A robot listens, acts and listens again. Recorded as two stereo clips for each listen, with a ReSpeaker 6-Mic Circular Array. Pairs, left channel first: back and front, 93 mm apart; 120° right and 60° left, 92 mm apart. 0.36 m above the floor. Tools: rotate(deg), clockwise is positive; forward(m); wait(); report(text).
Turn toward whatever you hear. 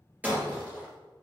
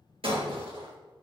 rotate(-70)
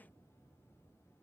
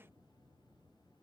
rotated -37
rotate(-35)
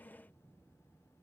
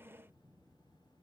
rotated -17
rotate(-15)
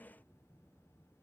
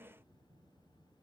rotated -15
report("I heard breaking glass from this way, but can't make it out now.")